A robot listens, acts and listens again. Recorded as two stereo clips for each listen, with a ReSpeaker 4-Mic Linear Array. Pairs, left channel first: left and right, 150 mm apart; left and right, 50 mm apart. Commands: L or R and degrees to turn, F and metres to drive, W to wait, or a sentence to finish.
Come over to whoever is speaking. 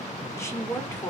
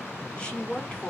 L20
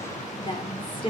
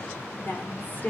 L140
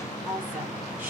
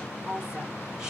R15
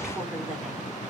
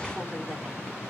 W
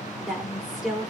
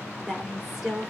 F1.0
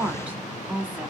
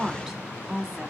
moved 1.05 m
R15
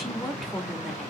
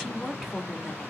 F1.0
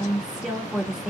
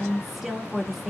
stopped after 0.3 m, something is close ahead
I am next to the woman speaking.